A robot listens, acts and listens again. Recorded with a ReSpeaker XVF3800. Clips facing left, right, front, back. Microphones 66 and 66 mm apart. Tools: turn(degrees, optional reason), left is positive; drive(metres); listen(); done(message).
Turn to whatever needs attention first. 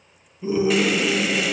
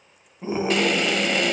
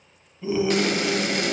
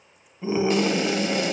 turn(degrees=-120, reason="The scream: 120° right.")
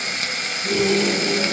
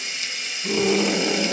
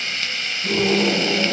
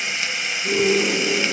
turn(degrees=-15, reason="The scream is now 15° right.")
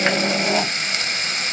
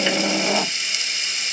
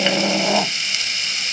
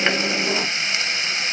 done("Facing the scream.")